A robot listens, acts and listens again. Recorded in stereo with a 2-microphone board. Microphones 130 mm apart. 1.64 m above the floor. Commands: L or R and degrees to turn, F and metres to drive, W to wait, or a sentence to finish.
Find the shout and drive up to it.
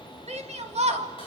R60
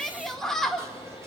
F1.0
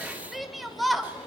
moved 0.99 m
F1.0
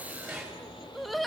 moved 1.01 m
F1.0
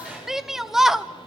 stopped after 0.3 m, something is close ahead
Arrived at the shout, straight ahead.